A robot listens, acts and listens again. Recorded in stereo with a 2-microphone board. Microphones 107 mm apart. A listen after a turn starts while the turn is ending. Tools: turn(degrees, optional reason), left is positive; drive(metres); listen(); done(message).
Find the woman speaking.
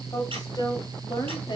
turn(degrees=45, reason="The woman speaking: about 45° left or 135° left.")
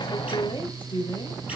turn(degrees=45, reason="The woman speaking: about 45° left or 135° left.")
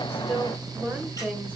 turn(degrees=-15, reason="So it is at 15° right.")
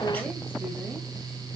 listen()
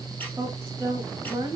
turn(degrees=-30, reason="The woman speaking is now 30° right.")
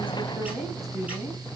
done("Facing the woman speaking, 1 to 2 m away.")